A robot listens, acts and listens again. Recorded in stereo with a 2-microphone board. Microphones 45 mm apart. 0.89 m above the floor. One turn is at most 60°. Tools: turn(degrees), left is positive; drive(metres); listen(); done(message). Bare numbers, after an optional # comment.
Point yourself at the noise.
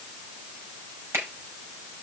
# The finger snap: about 65° right or 115° right.
turn(-60)
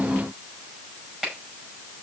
# So it is at 10° right.
turn(-10)
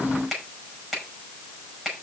done("Facing the finger snap, over 4 m away.")